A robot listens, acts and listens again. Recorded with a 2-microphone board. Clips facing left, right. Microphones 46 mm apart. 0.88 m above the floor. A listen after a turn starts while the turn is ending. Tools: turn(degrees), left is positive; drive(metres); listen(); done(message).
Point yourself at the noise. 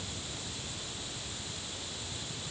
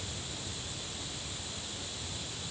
listen()
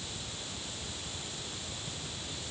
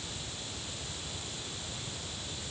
listen()
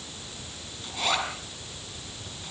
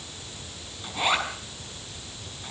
turn(degrees=-15)
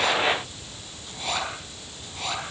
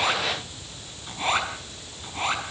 turn(degrees=-145)
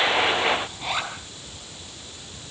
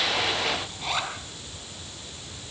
done("Facing the zipper.")